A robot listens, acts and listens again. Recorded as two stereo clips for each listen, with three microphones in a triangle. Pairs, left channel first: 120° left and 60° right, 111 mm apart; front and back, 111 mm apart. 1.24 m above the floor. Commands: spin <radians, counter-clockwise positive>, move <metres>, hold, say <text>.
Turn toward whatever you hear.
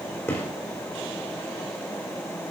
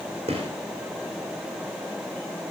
spin -2.97
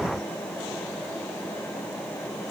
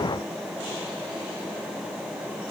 say I heard a gunshot from this way, but can't make it out now.